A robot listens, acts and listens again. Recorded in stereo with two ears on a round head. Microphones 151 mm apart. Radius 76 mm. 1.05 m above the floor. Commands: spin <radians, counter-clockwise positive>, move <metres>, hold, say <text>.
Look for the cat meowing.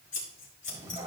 spin -0.35
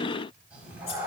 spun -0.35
spin -0.52
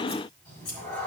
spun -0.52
spin 0.17
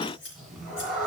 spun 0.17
say Found it: a cat meowing, straight ahead, 2 to 4 m away.